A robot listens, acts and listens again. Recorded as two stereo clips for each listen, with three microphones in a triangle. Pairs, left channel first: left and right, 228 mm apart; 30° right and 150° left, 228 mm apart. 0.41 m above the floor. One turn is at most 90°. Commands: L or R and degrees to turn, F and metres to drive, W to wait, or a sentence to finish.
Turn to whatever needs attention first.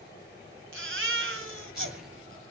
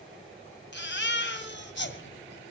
R65
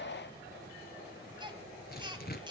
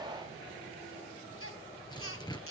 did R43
R20
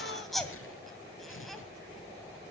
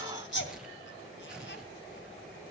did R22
Facing the baby crying.